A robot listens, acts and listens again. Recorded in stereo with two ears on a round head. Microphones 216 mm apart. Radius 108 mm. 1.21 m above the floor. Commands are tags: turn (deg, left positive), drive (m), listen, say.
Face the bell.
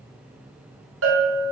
<turn deg="-60"/>
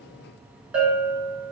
<say>Found it: a bell, straight ahead, 2 to 4 m away.</say>